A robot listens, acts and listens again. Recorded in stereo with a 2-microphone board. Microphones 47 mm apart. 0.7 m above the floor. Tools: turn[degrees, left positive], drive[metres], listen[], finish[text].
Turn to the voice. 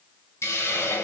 Action: listen[]
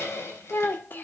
Thought: The child speaking: about 45° left or 135° left.
Action: turn[45]
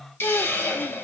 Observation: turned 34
Thought: So it is at 100° left.
Action: turn[100]
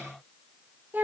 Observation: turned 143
Thought: The child speaking is now 45° right.
Action: turn[-45]
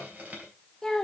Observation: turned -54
Thought: The child speaking is now 10° left.
Action: turn[10]
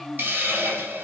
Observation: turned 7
Action: finish[Facing the child speaking, 1 to 2 m away.]